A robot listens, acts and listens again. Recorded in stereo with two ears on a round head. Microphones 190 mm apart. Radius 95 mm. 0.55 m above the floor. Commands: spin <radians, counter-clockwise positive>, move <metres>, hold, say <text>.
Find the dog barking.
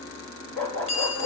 spin 0.52
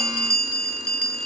hold
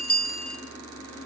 hold
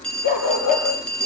spin 2.53
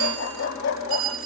spin 1.05
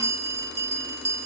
hold
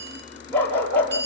spin 0.17
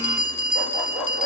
say Facing the dog barking.